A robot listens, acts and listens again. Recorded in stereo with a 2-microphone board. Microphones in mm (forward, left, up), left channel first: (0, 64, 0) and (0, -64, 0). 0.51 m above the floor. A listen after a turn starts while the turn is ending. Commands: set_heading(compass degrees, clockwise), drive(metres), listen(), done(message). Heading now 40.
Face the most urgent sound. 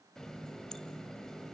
listen()
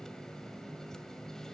listen()
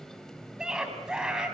set_heading(70)
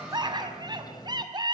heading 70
set_heading(215)
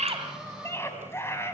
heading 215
set_heading(195)
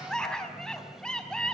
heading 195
done("Facing the scream.")